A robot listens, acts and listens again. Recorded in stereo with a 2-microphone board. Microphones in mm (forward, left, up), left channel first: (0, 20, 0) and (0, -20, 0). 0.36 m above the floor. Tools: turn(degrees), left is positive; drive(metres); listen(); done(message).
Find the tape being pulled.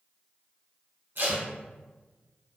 turn(degrees=-65)
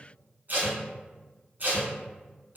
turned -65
turn(degrees=-50)
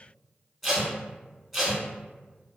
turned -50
done("Found it: tape being pulled, straight ahead.")